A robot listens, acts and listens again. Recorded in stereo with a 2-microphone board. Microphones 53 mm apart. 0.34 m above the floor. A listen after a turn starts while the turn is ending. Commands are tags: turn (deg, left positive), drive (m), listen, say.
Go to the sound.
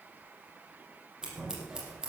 <turn deg="-30"/>
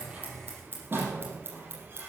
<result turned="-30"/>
<turn deg="-140"/>
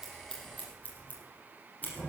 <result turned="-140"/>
<turn deg="30"/>
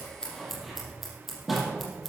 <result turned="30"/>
<drive m="1.0"/>
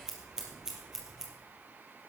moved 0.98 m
<turn deg="-10"/>
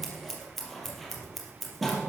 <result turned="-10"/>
<drive m="1.0"/>
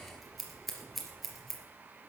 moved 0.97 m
<drive m="1.0"/>
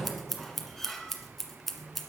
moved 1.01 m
<drive m="1.0"/>
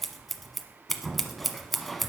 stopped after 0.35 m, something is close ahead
<say>Arrived at the scissors, straight ahead.</say>